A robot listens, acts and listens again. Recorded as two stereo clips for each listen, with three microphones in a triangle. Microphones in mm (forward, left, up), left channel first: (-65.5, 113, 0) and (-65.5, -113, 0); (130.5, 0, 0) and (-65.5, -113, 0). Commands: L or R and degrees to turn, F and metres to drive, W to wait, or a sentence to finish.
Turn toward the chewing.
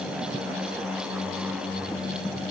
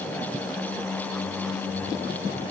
W
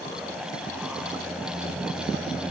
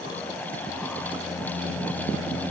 W
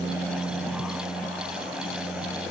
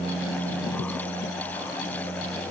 I can't make out chewing.